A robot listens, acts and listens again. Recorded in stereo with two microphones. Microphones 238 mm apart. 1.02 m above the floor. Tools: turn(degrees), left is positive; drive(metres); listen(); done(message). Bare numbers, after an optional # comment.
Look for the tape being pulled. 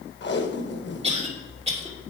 # The tape being pulled: about 50° left or 130° left.
turn(50)
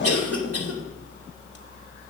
listen()
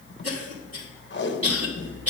# So it is at 65° left.
turn(65)
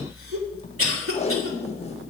# The tape being pulled is now 30° left.
turn(30)
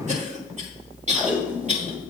done("Found it: tape being pulled, straight ahead, 1 to 2 m away.")